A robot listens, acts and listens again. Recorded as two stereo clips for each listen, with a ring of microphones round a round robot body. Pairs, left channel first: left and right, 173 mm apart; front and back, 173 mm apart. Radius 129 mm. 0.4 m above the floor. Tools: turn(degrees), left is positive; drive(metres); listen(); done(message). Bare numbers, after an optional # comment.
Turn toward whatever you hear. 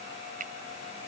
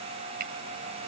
# The finger snap: 140° right.
turn(-140)
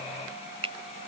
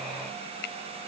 # The finger snap is now 30° right.
turn(-30)
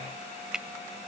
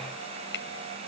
done("Facing the finger snap.")